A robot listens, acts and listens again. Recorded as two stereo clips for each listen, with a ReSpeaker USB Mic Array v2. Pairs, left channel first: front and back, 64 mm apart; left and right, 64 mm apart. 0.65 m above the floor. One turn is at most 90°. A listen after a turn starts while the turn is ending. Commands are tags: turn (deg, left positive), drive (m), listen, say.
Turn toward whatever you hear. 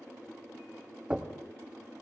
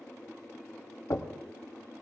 <turn deg="90"/>
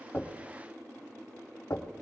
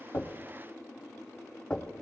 <turn deg="15"/>
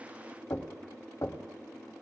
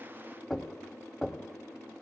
<say>Found it: knocking, straight ahead, 1 to 2 m away.</say>